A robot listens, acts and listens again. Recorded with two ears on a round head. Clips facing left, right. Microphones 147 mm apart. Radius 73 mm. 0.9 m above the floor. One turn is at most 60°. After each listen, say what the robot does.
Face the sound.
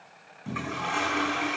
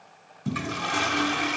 Turn 45° right.
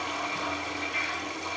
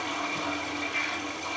Found it: a toilet flushing, straight ahead.